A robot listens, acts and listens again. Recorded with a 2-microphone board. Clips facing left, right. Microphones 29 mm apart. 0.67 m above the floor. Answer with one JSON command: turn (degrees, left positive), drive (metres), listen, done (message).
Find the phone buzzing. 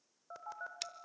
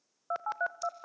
{"turn": -55}
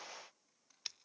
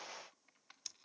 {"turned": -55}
{"listen": true}
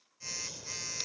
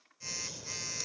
{"done": "Facing the phone buzzing."}